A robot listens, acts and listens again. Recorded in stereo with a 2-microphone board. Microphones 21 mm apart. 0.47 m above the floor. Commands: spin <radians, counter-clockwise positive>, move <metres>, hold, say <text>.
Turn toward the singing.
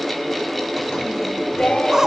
spin 1.13
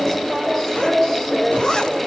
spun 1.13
spin 0.35
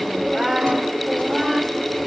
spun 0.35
say Facing the singing, 1 to 2 m away.